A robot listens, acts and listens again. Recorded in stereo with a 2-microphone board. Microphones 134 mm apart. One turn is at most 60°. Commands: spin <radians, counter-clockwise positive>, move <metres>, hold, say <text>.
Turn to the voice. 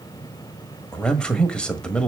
spin 0.52
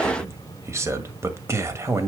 spin -0.44
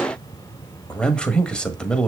say Found it: a man speaking, straight ahead.